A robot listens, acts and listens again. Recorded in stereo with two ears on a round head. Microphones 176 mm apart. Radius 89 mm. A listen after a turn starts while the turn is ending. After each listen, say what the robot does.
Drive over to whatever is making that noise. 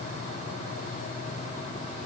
Keep listening.
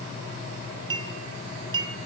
Turn 25° right.
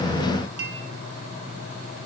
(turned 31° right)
Turn 125° right.
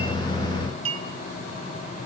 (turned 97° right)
Turn 30° right.
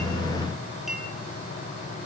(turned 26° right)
Keep listening.
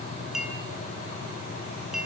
Drive 1.0 m forward.
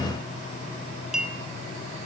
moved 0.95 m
Drive 1.0 m forward.
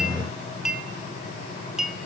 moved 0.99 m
Drive 1.0 m forward.
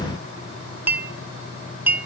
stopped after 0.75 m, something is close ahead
Turn 10° right.
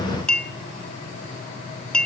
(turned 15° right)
I am next to the clink.